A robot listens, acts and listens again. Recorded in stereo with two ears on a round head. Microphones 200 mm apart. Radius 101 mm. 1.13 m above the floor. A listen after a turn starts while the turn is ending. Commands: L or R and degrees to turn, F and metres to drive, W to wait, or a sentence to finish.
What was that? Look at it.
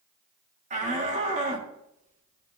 R35
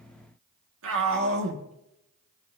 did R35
R115
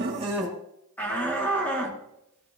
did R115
L10
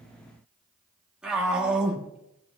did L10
Found it: a shout, straight ahead, 1 to 2 m away.